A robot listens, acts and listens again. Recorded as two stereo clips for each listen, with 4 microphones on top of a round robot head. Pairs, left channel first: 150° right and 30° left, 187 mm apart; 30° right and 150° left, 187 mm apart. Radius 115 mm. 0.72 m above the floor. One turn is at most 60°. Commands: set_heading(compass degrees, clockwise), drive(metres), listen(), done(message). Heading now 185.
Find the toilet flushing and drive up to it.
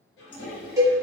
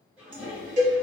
set_heading(245)
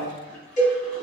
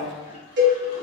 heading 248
set_heading(308)
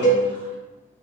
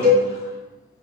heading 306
set_heading(316)
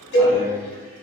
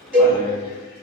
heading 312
done("Facing where the toilet flushing came from. I can't hear it now. I did not reach it.")